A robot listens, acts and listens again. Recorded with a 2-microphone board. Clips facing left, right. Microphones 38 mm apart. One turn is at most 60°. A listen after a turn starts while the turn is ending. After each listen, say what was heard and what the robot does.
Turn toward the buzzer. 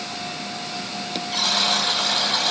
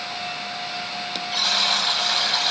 Turn 30° right.
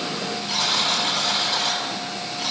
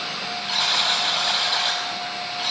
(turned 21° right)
So it is at 145° right. Turn 60° right.
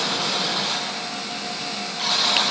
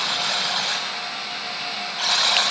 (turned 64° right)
The buzzer is now 85° right. Turn 60° right.
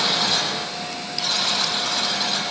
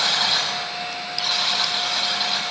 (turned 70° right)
The buzzer is now 15° right. Turn 15° right.
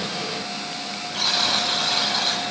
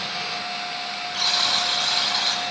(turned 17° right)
Found it: a buzzer, straight ahead.